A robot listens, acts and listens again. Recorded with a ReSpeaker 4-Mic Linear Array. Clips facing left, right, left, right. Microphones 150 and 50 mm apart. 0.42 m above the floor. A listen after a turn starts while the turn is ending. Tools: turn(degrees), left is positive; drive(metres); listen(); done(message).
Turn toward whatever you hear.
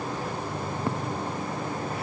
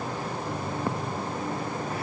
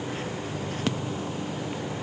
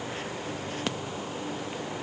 listen()
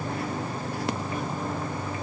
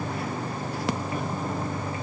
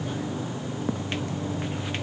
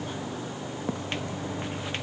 turn(degrees=-30)
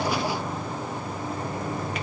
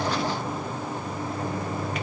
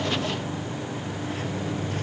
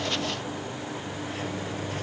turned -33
done("Facing the microwave.")